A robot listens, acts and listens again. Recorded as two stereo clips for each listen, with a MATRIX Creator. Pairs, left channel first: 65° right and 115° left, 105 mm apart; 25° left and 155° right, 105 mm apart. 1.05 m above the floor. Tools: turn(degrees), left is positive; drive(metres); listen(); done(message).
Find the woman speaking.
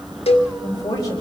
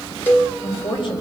turn(degrees=-15)
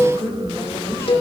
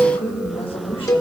done("Found it: a woman speaking, straight ahead, over 4 m away.")